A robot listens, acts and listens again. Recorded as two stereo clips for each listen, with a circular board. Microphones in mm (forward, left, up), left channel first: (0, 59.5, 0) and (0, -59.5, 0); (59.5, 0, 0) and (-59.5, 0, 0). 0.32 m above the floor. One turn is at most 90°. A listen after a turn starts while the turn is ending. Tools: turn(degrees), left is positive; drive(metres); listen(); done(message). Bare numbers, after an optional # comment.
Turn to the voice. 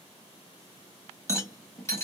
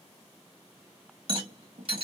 listen()
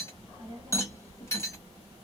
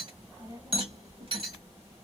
# The child speaking: 120° right.
turn(-90)
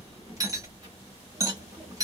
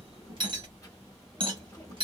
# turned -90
# The child speaking is now 55° right.
turn(-55)
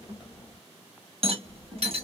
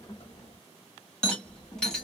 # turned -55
done("Facing the child speaking, 1 to 2 m away.")